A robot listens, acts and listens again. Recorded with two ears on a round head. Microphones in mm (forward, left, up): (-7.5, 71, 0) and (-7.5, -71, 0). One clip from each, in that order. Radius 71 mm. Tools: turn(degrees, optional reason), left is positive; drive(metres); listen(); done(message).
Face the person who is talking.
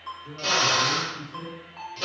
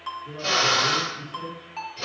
turn(degrees=60, reason="The man speaking: about 60° left or 120° left.")
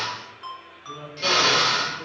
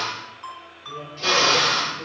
turn(degrees=50, reason="So it is at 50° left.")
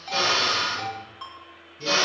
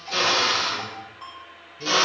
listen()
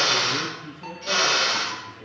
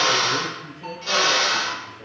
done("Found it: a man speaking, straight ahead, 2 to 4 m away.")